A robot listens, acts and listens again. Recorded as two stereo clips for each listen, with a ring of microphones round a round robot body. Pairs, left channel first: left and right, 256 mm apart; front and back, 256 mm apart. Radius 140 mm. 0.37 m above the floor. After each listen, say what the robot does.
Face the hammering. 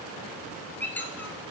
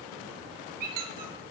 Keep listening.
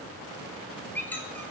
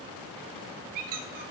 Keep listening.
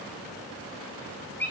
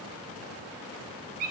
I can't make out hammering, only a squeak.